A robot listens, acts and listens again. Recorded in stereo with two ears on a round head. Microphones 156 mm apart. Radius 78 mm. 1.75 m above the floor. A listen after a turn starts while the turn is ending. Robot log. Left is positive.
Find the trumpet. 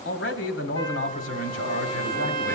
note: The trumpet: about 30° left or 150° left.
cmd yaw +30
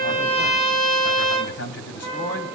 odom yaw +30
note: So it is at 120° left.
cmd yaw +120
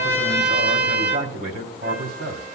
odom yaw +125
note: The trumpet is now 10° right.
cmd yaw -10
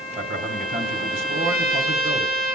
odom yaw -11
end: Facing the trumpet, over 4 m away.